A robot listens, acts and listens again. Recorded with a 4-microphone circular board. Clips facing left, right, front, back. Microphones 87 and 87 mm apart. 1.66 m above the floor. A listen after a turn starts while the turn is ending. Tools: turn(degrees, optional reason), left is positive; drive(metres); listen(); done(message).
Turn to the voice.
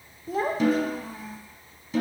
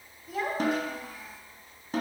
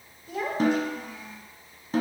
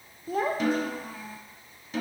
turn(degrees=140, reason="The child speaking: 140° left.")
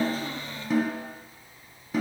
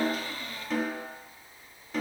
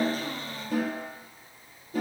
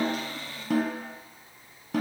done("Facing the child speaking, under 1 m away.")